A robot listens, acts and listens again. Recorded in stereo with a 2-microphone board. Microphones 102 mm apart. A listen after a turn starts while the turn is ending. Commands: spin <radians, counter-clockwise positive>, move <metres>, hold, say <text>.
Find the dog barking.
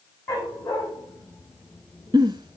spin 0.52
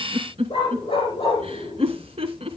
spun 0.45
spin 2.18
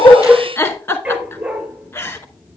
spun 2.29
spin -0.26
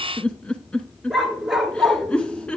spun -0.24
say Found it: a dog barking, straight ahead, 1 to 2 m away.